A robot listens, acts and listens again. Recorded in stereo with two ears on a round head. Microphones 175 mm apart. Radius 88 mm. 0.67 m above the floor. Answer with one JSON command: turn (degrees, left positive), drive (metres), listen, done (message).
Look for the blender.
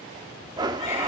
{"turn": -20}
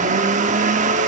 {"turn": -135}
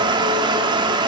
{"turn": -25}
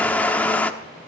{"turn": 10}
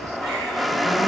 {"done": "Found it: a blender, straight ahead, 1 to 2 m away."}